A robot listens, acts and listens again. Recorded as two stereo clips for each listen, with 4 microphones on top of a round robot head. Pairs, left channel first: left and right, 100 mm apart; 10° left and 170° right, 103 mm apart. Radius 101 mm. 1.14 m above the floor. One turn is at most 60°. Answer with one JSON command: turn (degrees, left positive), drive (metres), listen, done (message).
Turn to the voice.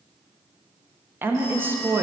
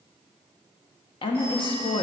{"turn": -20}
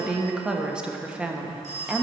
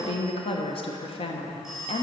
{"turn": -10}
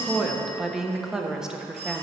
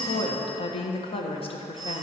{"done": "Facing the woman speaking, 1 to 2 m away."}